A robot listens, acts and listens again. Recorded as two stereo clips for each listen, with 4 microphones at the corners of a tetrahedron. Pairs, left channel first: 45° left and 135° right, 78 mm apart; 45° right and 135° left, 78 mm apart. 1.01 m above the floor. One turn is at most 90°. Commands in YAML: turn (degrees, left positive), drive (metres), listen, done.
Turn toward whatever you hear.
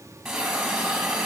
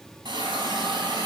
turn: 90
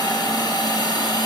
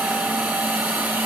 turn: 70
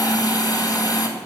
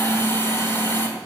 turn: 10
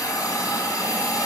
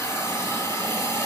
done: "Facing the hiss."